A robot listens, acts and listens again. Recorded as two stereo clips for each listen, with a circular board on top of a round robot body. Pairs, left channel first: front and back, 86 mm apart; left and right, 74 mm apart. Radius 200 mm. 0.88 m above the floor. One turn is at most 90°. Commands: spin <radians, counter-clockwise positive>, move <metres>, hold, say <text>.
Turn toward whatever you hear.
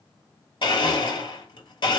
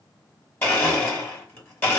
spin 0.52
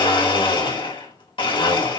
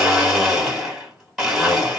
say Found it: a blender, straight ahead, 2 to 4 m away.